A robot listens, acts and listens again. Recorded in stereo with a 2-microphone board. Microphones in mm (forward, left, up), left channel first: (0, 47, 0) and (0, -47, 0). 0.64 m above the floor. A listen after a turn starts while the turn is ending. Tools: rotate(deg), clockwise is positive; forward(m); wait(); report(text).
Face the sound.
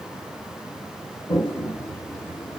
rotate(-60)
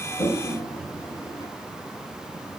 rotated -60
rotate(-50)
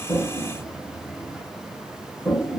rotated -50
report("Facing the toilet flushing, 1 to 2 m away.")